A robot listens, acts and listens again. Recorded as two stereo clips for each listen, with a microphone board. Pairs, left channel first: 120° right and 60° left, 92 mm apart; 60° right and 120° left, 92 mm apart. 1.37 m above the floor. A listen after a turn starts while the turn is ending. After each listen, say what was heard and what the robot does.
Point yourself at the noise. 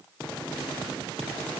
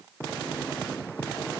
Keep listening.
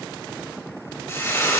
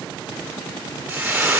The frying: 170° right. Turn 170° right.
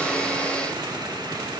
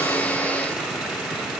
Keep listening.
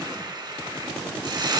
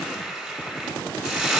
The frying is now 40° left. Turn 40° left.
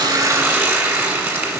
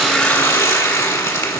Facing the frying.